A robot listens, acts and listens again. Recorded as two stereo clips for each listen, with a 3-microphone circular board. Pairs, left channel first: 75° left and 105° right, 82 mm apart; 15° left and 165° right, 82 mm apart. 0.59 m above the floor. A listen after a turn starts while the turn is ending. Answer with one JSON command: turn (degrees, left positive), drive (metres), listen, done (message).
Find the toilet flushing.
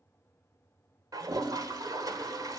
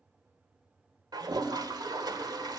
{"turn": -140}
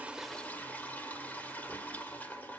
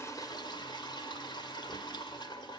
{"done": "Facing the toilet flushing."}